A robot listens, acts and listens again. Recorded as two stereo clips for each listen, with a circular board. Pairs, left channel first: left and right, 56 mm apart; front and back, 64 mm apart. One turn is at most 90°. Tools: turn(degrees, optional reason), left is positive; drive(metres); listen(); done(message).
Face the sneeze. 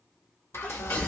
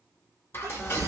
turn(degrees=90, reason="The sneeze: 155° left.")
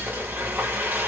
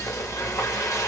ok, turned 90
turn(degrees=65, reason="Nothing new. It was at 65° left.")
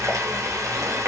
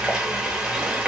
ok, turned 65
done("Facing where the sneeze came from. I can't hear it now.")